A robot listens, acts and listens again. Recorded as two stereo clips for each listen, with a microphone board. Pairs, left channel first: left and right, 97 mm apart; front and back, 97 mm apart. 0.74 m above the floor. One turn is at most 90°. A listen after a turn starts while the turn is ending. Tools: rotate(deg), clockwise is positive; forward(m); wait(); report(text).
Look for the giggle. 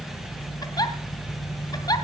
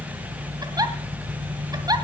rotate(-90)
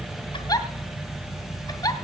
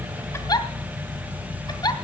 rotate(-45)
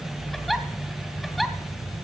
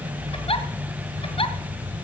report("Found it: a giggle, straight ahead, 2 to 4 m away.")